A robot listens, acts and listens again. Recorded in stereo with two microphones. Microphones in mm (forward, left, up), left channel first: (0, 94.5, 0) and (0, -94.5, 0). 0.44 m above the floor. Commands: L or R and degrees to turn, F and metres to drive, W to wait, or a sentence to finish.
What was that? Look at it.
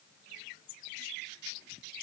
W
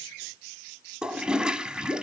R30
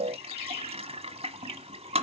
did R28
R150
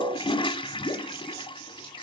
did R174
L25
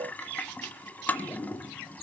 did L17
L10
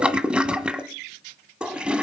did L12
Found it: a toilet flushing, straight ahead, 1 to 2 m away.